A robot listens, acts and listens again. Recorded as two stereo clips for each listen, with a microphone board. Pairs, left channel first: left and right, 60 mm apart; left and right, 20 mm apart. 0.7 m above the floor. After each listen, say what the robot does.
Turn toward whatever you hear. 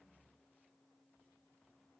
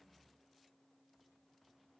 Keep listening.
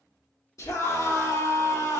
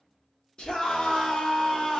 Turn 60° left.
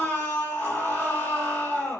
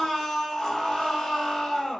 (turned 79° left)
Turn 35° left.
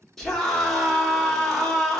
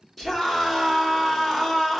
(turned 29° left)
Facing the scream.